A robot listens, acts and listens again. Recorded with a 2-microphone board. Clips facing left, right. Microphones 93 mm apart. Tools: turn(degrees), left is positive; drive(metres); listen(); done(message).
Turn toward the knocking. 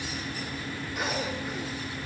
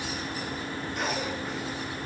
listen()
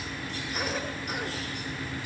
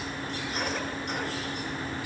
listen()
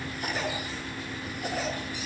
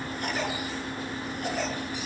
done("I can't make out knocking, only a cough.")